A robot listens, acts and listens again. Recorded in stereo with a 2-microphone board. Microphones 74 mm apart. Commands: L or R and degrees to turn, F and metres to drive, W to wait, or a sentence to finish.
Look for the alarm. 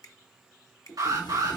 R70
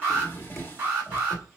R25
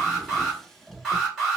Found it: an alarm, straight ahead, 2 to 4 m away.